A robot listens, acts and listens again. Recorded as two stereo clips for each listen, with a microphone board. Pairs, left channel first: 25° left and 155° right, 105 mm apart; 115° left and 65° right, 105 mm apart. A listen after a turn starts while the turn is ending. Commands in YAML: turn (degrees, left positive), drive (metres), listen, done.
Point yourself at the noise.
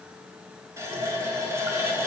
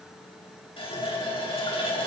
turn: 140
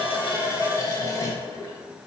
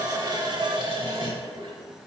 turn: -30
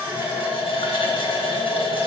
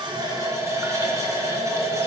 done: "Facing the running tap."